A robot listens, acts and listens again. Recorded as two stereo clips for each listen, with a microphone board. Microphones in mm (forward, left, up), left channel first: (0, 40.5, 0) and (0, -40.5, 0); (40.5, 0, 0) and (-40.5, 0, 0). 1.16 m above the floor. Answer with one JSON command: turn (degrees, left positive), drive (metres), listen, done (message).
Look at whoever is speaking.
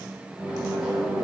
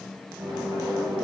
{"listen": true}
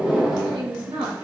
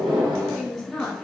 {"turn": -85}
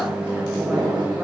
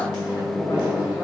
{"listen": true}
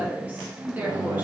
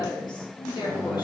{"turn": -25}
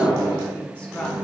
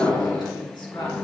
{"listen": true}
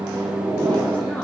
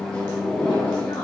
{"listen": true}
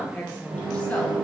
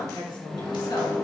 {"turn": 15}
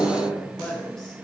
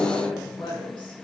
{"done": "Facing the woman speaking."}